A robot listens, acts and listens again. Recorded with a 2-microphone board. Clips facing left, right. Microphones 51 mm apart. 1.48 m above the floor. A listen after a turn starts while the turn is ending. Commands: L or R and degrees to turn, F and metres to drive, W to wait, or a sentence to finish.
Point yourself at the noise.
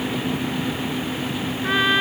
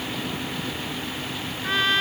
L30
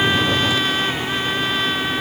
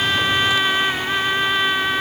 R15
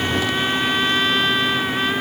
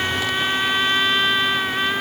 Found it: a trumpet, straight ahead.